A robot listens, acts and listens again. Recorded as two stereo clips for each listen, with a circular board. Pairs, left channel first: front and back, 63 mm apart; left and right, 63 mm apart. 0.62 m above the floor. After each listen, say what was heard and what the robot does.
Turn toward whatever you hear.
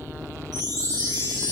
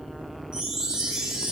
The chime: 165° right. Turn 165° right.
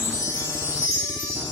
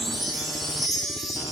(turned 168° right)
Found it: a chime, straight ahead.